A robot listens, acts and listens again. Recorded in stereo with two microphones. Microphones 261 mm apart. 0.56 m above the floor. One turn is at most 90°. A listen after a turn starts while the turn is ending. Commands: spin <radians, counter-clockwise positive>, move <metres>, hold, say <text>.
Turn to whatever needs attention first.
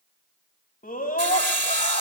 spin 0.52
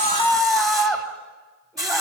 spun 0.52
say Found it: a scream, straight ahead.